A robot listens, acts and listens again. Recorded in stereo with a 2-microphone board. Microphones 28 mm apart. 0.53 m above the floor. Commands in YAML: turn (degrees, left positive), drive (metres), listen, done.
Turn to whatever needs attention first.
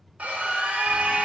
turn: -55
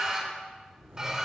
turn: -30
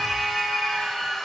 done: "Facing the scream."